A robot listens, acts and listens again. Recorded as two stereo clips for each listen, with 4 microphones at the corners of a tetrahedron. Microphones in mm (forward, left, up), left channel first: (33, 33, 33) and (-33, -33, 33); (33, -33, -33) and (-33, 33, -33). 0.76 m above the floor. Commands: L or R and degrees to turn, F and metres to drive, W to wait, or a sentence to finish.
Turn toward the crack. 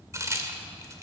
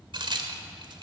L170
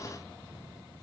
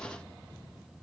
Facing where the crack came from. I can't hear it now.